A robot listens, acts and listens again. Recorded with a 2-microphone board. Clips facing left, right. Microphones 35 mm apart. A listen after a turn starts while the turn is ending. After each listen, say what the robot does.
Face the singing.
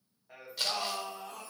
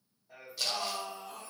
Turn 55° left.
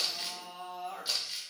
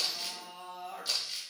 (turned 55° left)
Turn 80° left.
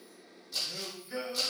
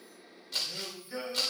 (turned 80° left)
Turn 25° left.
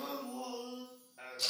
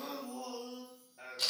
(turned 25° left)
Turn 25° left.
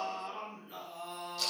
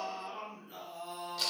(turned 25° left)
Turn 15° left.
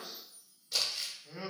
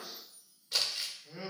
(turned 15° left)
Found it: singing, straight ahead.